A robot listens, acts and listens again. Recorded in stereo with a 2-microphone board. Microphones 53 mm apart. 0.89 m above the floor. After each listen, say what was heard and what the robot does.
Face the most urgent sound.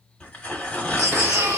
The baby crying: about 65° right or 115° right. Turn 65° right.
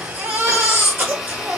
So it is at 45° right. Turn 45° right.
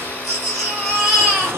Found it: a baby crying, straight ahead, 1 to 2 m away.